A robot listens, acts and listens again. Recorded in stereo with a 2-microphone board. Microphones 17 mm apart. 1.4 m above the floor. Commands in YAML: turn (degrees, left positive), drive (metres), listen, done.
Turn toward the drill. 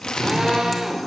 turn: -55
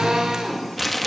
turn: -70
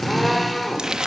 done: "Found it: a drill, straight ahead."